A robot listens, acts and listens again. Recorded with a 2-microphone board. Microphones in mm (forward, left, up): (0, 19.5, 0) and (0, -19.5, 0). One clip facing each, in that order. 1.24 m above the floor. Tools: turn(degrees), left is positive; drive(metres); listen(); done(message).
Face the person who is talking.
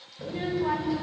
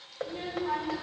turn(degrees=50)
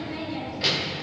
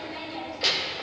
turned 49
done("Found it: a child speaking, straight ahead.")